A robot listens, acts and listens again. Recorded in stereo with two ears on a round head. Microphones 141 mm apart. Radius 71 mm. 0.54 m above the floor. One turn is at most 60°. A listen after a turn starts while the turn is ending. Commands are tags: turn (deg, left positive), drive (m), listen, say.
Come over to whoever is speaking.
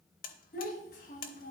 <turn deg="60"/>
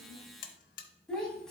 <drive m="1.0"/>
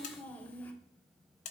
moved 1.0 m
<turn deg="10"/>
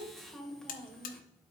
<drive m="1.0"/>
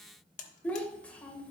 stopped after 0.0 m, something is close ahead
<turn deg="10"/>
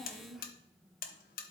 <say>I am next to the child speaking.</say>